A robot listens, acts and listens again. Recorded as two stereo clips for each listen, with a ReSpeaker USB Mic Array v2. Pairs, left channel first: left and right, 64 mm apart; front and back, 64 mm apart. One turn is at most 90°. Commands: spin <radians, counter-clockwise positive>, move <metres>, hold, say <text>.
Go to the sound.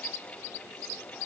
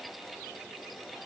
hold
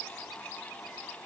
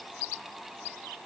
hold
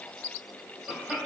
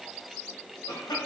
move 1.0
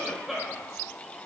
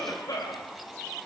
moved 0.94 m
move 1.0
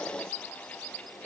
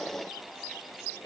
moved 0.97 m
hold
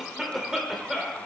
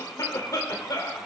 spin -0.17
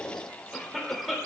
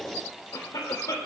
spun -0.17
move 1.0
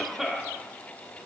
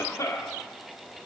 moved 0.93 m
move 1.0
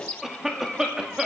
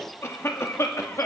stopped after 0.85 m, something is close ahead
spin -0.17
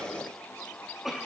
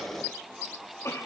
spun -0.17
say Arrived at the cough, straight ahead.